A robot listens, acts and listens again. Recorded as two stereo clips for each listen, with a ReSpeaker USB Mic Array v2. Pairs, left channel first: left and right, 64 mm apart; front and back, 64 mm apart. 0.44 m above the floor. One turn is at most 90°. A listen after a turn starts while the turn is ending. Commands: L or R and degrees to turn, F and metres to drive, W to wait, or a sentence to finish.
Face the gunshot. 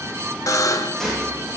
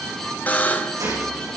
L90
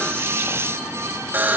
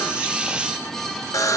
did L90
L80
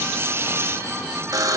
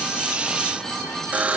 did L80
Facing where the gunshot came from. I can't hear it now.